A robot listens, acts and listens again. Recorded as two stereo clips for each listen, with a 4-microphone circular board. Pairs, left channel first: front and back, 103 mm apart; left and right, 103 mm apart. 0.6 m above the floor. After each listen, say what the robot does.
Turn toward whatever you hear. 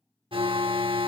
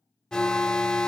Turn 170° left.
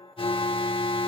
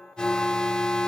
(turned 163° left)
Turn 10° left.
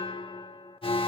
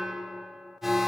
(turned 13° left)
Found it: an alarm, straight ahead.